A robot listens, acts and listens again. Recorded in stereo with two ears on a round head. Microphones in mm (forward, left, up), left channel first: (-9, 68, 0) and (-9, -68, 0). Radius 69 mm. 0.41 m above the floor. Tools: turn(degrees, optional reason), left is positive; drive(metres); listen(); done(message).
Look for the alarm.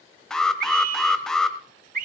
turn(degrees=30)
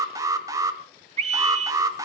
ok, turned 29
turn(degrees=-25, reason="So it is at 25° right.")
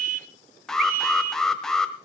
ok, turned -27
done("Facing the alarm, 1 to 2 m away.")